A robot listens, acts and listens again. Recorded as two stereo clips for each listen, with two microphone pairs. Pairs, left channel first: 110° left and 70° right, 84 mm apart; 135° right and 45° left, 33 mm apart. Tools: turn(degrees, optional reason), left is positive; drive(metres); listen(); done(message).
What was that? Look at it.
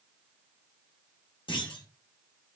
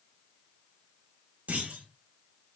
turn(degrees=85, reason="The clunk: 85° left.")
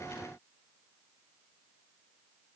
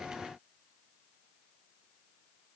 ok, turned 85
done("I heard a clunk from this way, but can't make it out now.")